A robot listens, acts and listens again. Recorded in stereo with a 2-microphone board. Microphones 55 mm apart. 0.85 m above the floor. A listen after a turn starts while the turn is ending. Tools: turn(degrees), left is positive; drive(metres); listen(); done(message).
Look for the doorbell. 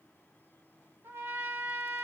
listen()
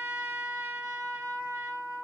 listen()
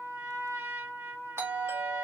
turn(degrees=-50)
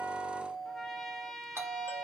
turn(degrees=-70)
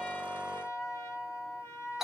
turn(degrees=-10)
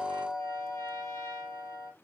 done("Found it: a doorbell, straight ahead, 1 to 2 m away.")